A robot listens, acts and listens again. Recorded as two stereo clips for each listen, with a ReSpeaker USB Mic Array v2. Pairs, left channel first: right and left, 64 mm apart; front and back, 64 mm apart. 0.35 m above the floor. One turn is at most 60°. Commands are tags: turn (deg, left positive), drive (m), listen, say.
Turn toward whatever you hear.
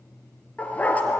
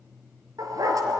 <turn deg="-60"/>
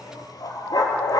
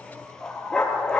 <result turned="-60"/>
<turn deg="-60"/>
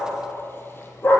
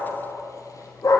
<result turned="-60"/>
<turn deg="-35"/>
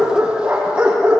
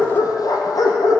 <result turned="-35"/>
<turn deg="15"/>
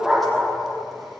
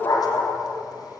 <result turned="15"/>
<say>Found it: a dog barking, straight ahead, over 4 m away.</say>